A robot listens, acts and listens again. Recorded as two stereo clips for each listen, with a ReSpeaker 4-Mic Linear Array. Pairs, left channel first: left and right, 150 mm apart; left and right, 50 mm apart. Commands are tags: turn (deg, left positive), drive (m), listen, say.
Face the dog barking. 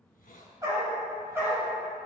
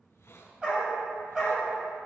<turn deg="-30"/>
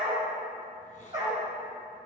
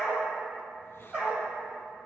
<turn deg="-155"/>
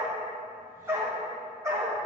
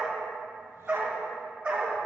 <turn deg="-20"/>
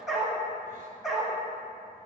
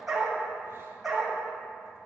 <say>Found it: a dog barking, straight ahead.</say>